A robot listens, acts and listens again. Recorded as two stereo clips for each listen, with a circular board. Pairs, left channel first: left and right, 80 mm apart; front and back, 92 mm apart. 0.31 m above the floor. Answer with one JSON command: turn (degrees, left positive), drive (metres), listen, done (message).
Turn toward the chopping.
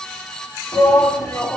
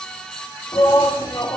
{"listen": true}
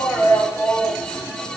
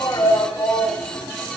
{"listen": true}
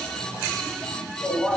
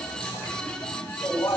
{"done": "I can't make out chopping, only a shout."}